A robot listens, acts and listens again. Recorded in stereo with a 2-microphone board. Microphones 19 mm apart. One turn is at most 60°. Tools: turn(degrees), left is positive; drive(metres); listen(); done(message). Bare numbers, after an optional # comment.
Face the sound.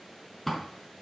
turn(30)
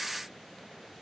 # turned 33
listen()
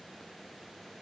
done("I heard a door slam, but can't make it out now. It was about 20° right or 135° left.")